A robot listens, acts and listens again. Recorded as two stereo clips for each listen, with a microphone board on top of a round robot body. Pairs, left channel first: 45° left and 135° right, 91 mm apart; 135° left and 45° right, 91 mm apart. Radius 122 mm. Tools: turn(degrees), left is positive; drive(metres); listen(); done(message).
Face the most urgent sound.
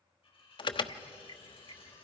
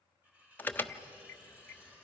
turn(degrees=65)
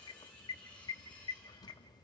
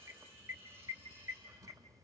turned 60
done("Found it: an alarm, straight ahead.")